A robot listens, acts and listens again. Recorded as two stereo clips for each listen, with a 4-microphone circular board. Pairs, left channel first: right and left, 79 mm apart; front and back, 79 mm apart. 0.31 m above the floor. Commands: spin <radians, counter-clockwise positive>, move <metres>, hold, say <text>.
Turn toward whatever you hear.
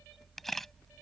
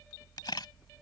say Found it: a camera shutter, straight ahead.